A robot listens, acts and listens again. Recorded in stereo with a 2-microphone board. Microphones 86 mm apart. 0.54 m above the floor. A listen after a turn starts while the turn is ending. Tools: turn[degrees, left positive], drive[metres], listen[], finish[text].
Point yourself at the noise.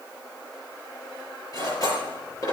Thought: The cutlery clinking: about 45° left or 135° left.
Action: turn[45]
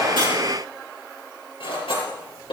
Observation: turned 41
Thought: So it is at 90° left.
Action: turn[90]
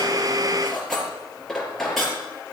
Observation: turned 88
Action: finish[Found it: cutlery clinking, straight ahead.]